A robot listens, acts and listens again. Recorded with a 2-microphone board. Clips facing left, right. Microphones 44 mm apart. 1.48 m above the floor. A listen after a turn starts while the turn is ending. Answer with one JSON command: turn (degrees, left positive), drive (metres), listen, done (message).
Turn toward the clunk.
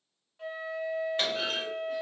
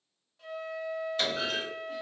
{"turn": 35}
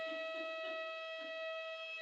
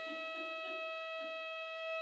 {"listen": true}
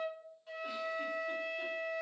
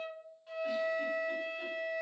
{"done": "I heard a clunk, but can't make it out now. It was about straight ahead or 110° left."}